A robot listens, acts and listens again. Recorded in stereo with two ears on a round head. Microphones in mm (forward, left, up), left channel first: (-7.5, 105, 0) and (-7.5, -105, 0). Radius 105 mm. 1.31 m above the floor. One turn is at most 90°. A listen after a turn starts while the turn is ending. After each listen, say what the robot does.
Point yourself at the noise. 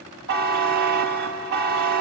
Turn 45° right.
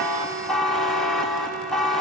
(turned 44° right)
Facing the buzzer, 1 to 2 m away.